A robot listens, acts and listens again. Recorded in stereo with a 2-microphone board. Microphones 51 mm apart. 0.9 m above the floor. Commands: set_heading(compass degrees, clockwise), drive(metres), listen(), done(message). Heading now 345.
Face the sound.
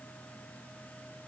listen()
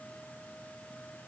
listen()
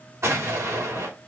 set_heading(45)
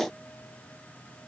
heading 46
listen()
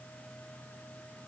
done("I heard an explosion, but can't make it out now. It was about straight ahead or 60° right.")